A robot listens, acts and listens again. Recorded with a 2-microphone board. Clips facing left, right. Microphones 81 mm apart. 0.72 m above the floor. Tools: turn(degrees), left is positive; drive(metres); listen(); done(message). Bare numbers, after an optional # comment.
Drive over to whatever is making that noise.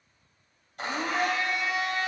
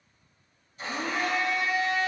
# The blender: about 70° left or 110° left.
turn(70)
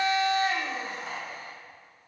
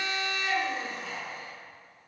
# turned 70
# So it is at 40° left.
turn(40)
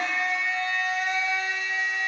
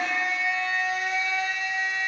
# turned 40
drive(1.0)
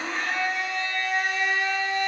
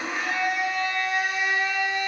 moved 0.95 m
# The blender is now 10° right.
turn(-10)
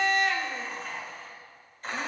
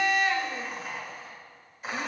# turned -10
drive(1.0)
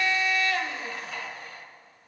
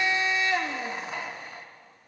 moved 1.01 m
# The blender is now 25° right.
turn(-25)
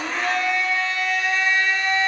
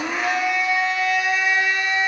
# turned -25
# The blender is now 10° right.
turn(-10)
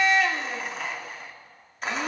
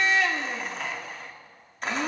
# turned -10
drive(1.0)
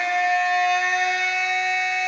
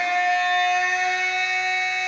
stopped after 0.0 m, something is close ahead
done("I am next to the blender.")